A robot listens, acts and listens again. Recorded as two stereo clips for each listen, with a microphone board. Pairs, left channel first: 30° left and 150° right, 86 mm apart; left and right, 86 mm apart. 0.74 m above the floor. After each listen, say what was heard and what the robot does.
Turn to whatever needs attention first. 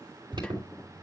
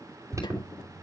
The alarm: 145° right. Turn 145° right.
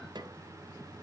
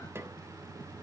Keep listening.
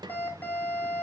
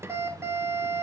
The alarm is now 35° right. Turn 35° right.
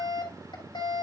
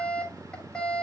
The alarm is now 10° left. Turn 10° left.
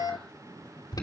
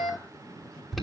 Found it: an alarm, straight ahead.